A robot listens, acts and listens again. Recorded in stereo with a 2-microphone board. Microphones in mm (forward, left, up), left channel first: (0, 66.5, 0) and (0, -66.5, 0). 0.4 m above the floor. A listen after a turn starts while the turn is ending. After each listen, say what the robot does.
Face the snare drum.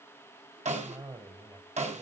Turn 65° right.
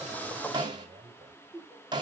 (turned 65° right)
Turn 40° right.
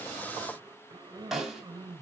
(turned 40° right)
Found it: a snare drum, straight ahead, 2 to 4 m away.